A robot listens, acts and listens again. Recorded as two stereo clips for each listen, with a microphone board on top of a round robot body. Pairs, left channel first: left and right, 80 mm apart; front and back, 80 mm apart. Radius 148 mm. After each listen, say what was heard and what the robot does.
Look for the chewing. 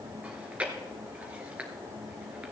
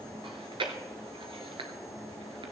The chewing: 165° right. Turn 165° right.
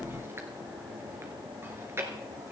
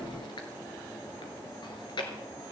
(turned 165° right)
The chewing is now 30° right. Turn 30° right.
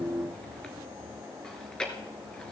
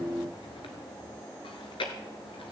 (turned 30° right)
The chewing is now 10° left. Turn 10° left.
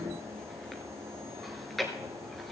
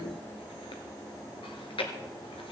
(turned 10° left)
Facing the chewing, 1 to 2 m away.